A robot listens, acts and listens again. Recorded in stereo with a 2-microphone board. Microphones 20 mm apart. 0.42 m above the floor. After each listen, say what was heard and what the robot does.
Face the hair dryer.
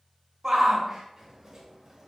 Keep listening.
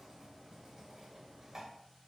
Keep listening.
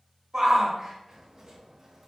I can't make out a hair dryer to turn to.